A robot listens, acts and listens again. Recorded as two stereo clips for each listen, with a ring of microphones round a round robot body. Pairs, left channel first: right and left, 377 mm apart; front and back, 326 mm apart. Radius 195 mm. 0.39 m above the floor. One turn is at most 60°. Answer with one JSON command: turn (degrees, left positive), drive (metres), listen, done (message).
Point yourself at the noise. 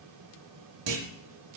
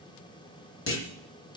{"turn": 50}
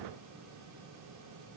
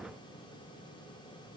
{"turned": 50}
{"done": "I heard a clunk from this way, but can't make it out now."}